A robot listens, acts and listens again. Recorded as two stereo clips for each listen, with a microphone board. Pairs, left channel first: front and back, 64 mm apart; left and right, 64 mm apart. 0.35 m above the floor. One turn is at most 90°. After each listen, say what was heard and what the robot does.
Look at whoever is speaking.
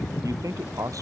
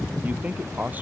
The man speaking: 155° right. Turn 90° right.
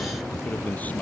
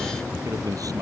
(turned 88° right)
The man speaking is now 65° right. Turn 65° right.
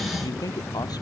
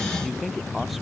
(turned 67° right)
Facing the man speaking.